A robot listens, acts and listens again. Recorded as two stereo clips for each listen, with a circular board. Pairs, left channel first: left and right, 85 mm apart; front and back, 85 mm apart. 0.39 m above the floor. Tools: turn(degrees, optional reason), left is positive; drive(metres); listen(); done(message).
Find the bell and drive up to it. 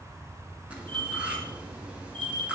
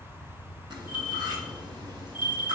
turn(degrees=-115, reason="The bell: 115° right.")
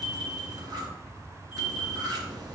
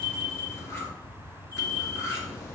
turn(degrees=-10, reason="The bell is now 10° right.")
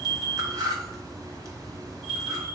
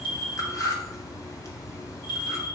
drive(metres=1.0)
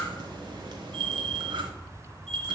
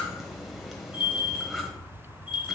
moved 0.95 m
drive(metres=1.0)
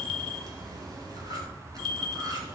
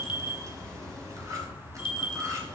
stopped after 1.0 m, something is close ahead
done("Arrived at the bell, straight ahead.")